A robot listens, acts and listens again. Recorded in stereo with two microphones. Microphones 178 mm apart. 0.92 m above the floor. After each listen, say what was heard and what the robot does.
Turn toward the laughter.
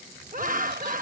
The laughter: about 50° right or 130° right. Turn 50° right.
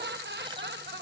So it is at 80° right. Turn 80° right.
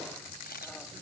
Keep listening.
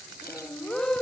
Found it: laughter, straight ahead.